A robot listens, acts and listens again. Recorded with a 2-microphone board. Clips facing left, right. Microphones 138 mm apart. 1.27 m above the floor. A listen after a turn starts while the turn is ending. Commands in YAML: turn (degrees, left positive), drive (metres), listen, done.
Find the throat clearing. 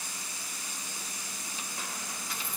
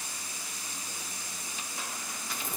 listen: true
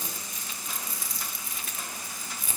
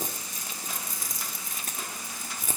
listen: true
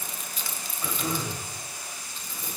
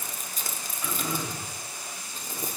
turn: 35
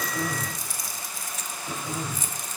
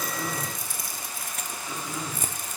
turn: 105
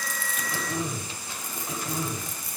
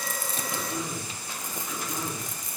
turn: 40
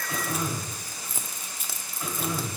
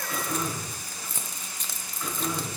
turn: 10
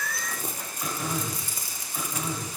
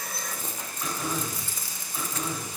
done: "Found it: throat clearing, straight ahead."